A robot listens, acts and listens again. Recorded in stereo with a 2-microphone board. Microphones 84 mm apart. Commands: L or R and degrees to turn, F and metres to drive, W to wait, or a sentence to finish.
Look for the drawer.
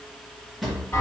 L30
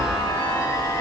W
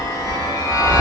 W
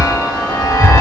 I heard a drawer, but can't make it out now. It was about 30° right or 150° left.